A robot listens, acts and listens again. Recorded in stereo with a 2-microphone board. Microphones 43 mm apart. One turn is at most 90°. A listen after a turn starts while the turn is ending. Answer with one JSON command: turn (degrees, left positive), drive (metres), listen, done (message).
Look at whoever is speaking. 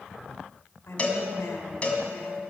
{"turn": 70}
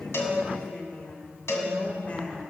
{"turn": 35}
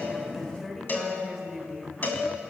{"done": "Facing the woman speaking, 2 to 4 m away."}